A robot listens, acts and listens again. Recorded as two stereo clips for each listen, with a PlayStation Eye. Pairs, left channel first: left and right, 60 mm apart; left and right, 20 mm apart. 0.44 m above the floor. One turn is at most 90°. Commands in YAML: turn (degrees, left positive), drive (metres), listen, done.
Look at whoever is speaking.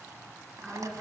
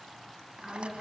turn: 30
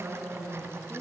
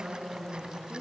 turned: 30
turn: -25
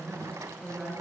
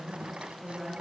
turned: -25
done: "Facing the woman speaking."